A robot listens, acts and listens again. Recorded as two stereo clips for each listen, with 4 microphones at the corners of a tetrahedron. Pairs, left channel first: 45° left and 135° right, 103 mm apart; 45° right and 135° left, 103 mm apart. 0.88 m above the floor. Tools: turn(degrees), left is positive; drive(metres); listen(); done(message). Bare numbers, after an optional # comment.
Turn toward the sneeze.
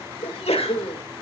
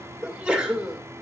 # The sneeze: 55° left.
turn(55)
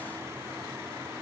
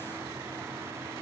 done("I heard a sneeze from this way, but can't make it out now.")